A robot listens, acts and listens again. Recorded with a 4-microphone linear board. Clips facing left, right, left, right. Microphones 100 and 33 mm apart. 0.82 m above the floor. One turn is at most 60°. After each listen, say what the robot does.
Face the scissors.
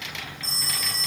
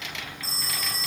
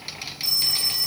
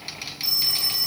Keep listening.
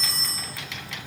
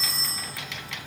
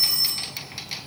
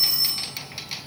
Keep listening.
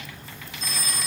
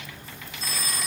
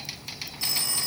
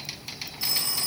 I can't make out scissors to turn to.